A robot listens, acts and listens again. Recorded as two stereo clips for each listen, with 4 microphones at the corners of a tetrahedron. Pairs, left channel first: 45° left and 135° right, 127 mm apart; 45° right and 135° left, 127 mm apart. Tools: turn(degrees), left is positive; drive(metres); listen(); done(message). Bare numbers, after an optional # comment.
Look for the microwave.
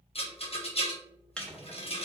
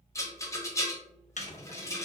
# The microwave: 35° right.
turn(-35)
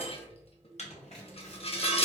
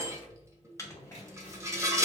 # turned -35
# The microwave is now 20° left.
turn(20)
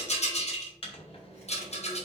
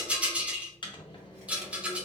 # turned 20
done("Facing the microwave, under 1 m away.")